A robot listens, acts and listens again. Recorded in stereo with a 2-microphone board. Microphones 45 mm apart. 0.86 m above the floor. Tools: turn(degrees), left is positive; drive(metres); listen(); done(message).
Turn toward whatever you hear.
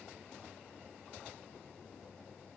listen()
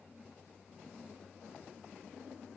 listen()
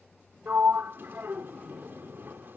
turn(degrees=-50)
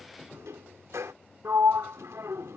turn(degrees=-80)
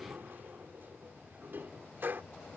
turn(degrees=-45)
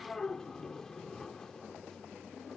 turn(degrees=15)
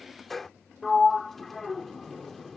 done("Facing the sliding door.")